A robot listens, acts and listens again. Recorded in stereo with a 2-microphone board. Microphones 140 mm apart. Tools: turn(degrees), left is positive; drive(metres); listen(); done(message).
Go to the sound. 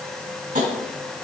turn(degrees=-70)
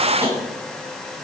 listen()
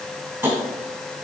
turn(degrees=-20)
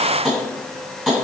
drive(metres=1.0)
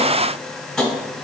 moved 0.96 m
drive(metres=1.0)
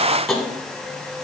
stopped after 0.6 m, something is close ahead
done("Arrived at the tapping, straight ahead.")